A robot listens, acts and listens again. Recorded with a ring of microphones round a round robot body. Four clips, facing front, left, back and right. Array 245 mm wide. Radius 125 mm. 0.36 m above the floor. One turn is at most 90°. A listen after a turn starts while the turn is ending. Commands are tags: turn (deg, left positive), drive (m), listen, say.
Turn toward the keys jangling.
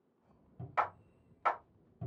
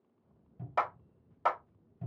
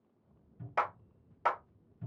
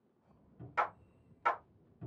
<listen/>
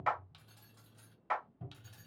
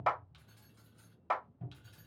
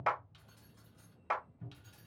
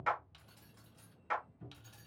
<turn deg="-45"/>
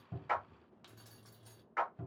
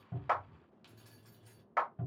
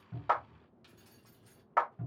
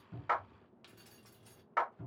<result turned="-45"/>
<turn deg="-35"/>
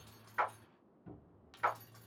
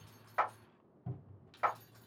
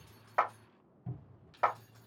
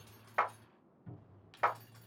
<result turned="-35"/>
<turn deg="-20"/>
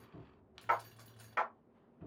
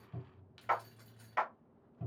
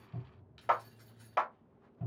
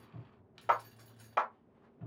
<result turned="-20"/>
<say>Found it: keys jangling, straight ahead.</say>